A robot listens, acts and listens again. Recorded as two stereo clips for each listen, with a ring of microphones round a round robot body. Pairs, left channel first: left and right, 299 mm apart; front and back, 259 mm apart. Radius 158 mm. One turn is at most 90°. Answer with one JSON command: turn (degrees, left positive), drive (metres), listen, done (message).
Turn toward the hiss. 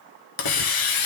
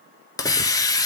{"turn": 75}
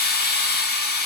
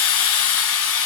{"turn": 30}
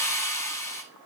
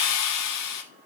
{"turn": 10}
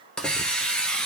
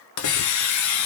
{"done": "Found it: a hiss, straight ahead."}